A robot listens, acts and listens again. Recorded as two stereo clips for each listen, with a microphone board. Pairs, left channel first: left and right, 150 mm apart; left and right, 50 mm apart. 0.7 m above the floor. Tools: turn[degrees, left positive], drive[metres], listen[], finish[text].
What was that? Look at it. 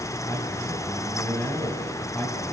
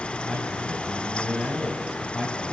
Action: turn[30]
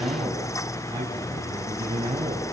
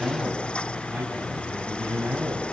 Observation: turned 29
Thought: So it is at 35° right.
Action: turn[-35]
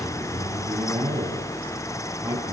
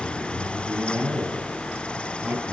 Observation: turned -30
Thought: The man speaking is now 10° right.
Action: turn[-10]
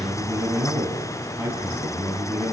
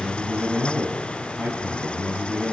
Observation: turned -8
Action: finish[Found it: a man speaking, straight ahead, over 4 m away.]